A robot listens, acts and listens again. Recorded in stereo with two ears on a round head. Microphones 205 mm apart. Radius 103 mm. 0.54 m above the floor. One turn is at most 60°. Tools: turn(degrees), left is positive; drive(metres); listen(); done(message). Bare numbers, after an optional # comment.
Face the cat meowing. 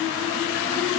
listen()
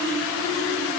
listen()
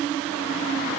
done("I can't make out a cat meowing to turn to.")